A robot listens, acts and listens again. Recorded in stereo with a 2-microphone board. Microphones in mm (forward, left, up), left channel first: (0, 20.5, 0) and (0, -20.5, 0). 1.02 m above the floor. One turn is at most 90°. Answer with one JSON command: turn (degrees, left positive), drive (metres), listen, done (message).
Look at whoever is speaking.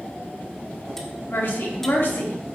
{"turn": 65}
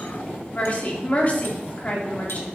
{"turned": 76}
{"turn": 35}
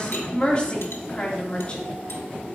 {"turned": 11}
{"turn": 25}
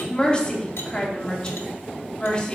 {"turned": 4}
{"turn": 20}
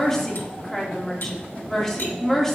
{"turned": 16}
{"done": "Facing the woman speaking."}